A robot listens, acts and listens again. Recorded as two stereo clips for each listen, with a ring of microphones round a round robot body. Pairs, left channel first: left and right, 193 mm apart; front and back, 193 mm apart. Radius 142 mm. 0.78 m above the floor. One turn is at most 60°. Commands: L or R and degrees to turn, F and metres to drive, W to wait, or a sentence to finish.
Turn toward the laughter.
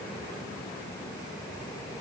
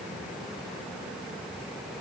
W
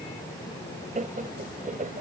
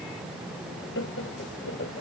R45
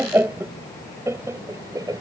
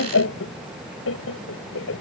R20
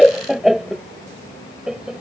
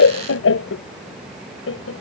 Facing the laughter.